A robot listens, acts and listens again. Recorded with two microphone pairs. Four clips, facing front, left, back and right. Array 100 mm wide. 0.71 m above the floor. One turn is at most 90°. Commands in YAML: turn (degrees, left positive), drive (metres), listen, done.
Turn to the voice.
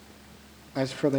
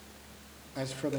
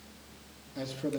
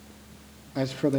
turn: -20
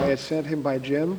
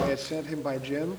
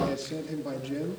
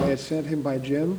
done: "Facing the man speaking."